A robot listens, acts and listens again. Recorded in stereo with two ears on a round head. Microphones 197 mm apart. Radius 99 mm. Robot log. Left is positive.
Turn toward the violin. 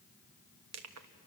cmd idle
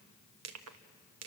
cmd idle
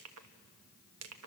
end: I can't make out a violin to turn to.